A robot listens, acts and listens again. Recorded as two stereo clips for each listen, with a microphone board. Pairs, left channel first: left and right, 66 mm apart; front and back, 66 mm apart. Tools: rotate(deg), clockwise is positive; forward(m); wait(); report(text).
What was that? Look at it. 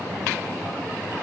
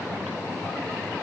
wait()
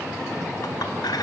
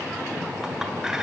rotate(-95)
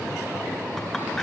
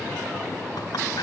wait()
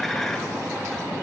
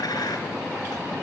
report("Facing the clink, 2 to 4 m away.")